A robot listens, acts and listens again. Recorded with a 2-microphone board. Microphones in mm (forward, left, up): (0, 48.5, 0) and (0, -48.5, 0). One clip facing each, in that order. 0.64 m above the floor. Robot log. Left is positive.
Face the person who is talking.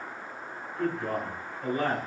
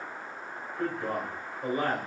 cmd yaw -30
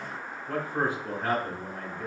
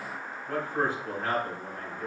note: So it is at 20° left.
cmd yaw +20
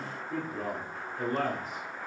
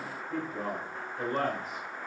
end: Found it: a man speaking, straight ahead.